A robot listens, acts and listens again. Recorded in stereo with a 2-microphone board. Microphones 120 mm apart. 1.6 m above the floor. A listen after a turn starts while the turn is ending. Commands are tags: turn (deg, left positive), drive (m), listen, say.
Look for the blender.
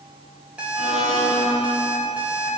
<turn deg="-75"/>
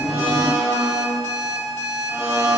<turn deg="-20"/>
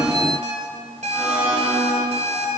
<turn deg="-10"/>
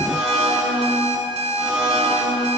<turn deg="-10"/>
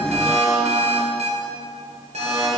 <say>Found it: a blender, straight ahead.</say>